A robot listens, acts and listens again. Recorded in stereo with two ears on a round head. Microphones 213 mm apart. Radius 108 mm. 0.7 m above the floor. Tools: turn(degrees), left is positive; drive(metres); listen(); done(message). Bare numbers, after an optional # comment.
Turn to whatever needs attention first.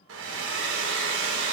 listen()
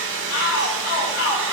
# The shout: about 65° left or 115° left.
turn(65)
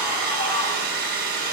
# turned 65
listen()
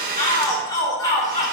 # So it is at 15° left.
turn(15)
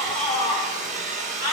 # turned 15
done("Found it: a shout, straight ahead.")